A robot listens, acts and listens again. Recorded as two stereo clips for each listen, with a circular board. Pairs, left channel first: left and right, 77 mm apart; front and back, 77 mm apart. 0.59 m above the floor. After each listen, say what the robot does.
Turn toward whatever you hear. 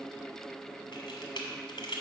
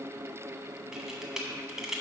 Turn 100° left.
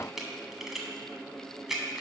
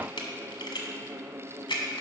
Found it: a camera shutter, straight ahead.